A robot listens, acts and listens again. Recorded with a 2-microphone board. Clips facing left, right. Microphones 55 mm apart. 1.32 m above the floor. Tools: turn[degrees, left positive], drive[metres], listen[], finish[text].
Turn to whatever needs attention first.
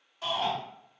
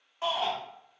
Thought: The shout: about 35° right or 145° right.
Action: turn[-35]
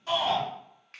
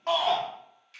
Thought: So it is at 115° right.
Action: turn[-115]
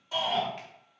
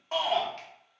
Thought: The shout is now 55° right.
Action: turn[-55]
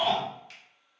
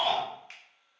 Action: finish[Found it: a shout, straight ahead, 1 to 2 m away.]